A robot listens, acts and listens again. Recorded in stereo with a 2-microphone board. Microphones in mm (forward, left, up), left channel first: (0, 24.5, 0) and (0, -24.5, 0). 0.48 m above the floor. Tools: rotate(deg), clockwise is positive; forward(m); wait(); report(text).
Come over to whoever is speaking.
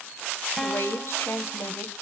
rotate(-60)
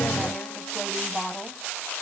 forward(1.0)
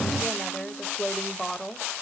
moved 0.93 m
forward(1.0)
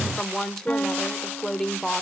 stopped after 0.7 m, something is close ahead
rotate(-15)
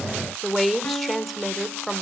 report("Arrived at the woman speaking, straight ahead.")